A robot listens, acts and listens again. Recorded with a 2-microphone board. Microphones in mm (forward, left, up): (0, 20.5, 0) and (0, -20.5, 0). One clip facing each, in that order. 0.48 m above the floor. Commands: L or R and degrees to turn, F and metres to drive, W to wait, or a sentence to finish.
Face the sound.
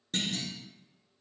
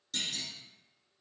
L40
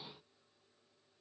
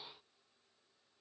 W
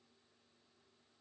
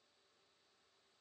I heard a clunk, but can't make it out now. It was about straight ahead or 100° left.